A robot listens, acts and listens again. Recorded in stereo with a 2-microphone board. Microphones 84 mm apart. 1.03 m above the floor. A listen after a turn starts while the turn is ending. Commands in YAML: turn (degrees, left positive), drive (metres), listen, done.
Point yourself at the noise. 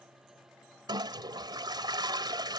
turn: -60
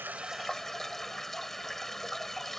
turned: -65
done: "Found it: a toilet flushing, straight ahead."